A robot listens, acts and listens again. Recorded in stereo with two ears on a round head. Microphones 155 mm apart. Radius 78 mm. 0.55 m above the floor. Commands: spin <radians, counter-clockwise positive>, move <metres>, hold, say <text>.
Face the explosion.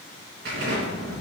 spin -1.05
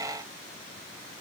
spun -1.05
hold
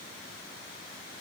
say I heard an explosion, but can't make it out now. It was about straight ahead or 60° right.